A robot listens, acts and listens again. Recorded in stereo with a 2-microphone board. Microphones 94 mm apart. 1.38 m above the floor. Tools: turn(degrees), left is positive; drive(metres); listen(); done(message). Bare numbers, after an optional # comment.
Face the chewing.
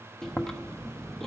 turn(30)
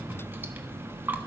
# So it is at 25° right.
turn(-25)
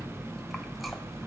done("Found it: chewing, straight ahead.")